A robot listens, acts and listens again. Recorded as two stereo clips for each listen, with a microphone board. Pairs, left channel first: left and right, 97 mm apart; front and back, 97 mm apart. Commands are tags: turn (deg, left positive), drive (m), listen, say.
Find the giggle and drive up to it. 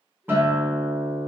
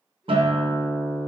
<listen/>
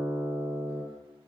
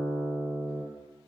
<listen/>
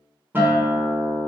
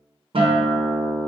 <say>I can't make out a giggle to turn to.</say>